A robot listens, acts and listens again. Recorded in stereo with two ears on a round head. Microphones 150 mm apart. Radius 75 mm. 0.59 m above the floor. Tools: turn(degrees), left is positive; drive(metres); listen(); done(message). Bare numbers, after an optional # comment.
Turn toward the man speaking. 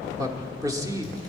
# The man speaking: about 20° right or 160° right.
turn(-20)
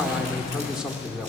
done("Facing the man speaking.")